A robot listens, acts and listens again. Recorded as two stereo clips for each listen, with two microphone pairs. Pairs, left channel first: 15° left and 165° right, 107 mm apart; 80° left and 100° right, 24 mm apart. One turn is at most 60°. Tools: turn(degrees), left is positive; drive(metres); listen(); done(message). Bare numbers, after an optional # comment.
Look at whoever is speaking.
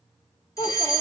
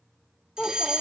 # The child speaking: 40° left.
turn(40)
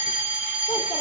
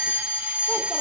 listen()
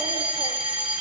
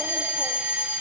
listen()
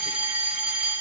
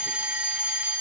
done("Facing where the child speaking came from. I can't hear it now.")